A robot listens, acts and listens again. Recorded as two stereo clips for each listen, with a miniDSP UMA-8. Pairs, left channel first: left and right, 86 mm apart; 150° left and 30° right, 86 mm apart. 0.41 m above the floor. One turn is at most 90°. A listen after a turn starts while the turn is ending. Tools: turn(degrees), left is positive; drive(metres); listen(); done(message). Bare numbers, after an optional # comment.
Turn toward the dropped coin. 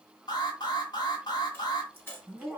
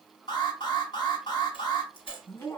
# The dropped coin: 155° left.
turn(90)
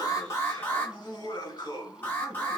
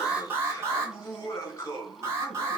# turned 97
# Nothing new. It was at 60° left.
turn(60)
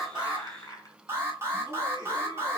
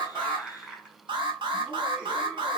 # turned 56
done("Facing where the dropped coin came from. I can't hear it now.")